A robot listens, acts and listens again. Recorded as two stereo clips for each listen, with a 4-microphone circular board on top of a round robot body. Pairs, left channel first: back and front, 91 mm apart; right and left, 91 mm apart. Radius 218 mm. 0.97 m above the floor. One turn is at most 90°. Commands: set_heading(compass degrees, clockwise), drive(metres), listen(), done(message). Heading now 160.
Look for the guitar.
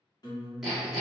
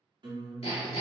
set_heading(70)
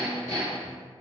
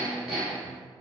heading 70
set_heading(30)
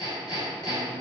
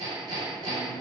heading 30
listen()
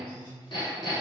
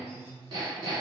done("Facing the guitar.")